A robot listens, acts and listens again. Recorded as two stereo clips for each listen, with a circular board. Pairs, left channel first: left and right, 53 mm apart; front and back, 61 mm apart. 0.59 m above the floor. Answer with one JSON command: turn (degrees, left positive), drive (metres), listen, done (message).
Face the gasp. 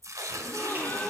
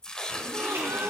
{"turn": 135}
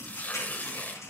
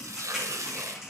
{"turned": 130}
{"done": "Facing where the gasp came from. I can't hear it now."}